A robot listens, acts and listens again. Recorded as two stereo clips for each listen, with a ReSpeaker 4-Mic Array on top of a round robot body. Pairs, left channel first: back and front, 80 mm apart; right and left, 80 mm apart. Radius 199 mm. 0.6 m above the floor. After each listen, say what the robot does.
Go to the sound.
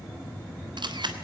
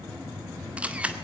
Turn 15° left.
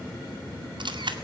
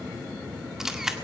Drive 1.0 m forward.
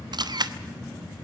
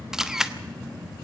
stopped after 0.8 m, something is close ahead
Arrived at the camera shutter, straight ahead.